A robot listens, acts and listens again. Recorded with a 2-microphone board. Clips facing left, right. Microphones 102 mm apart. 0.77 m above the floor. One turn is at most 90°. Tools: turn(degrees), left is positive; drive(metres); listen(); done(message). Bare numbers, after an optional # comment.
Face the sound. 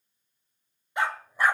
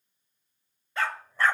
turn(30)
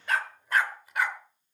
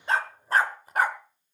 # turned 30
# So it is at 45° right.
turn(-45)
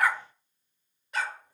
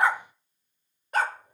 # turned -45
# The dog barking is now 50° right.
turn(-50)
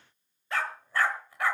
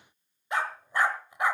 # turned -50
# The dog barking is now 20° right.
turn(-20)
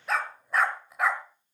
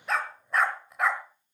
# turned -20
done("Facing the dog barking, 1 to 2 m away.")